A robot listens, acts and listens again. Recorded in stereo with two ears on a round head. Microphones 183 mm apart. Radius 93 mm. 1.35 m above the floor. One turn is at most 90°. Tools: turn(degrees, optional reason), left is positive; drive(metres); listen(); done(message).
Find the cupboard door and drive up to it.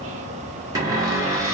turn(degrees=-15, reason="The cupboard door: about 15° right or 165° right.")
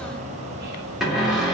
drive(metres=1.0)
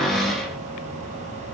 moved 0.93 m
drive(metres=1.0)
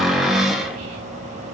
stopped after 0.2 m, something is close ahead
done("Arrived at the cupboard door, straight ahead.")